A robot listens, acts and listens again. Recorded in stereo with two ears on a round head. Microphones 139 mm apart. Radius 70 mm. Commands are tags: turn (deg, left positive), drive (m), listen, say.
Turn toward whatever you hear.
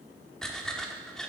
<turn deg="30"/>
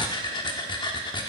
<turn deg="145"/>
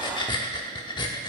<turn deg="35"/>
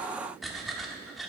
<say>Found it: breathing, straight ahead.</say>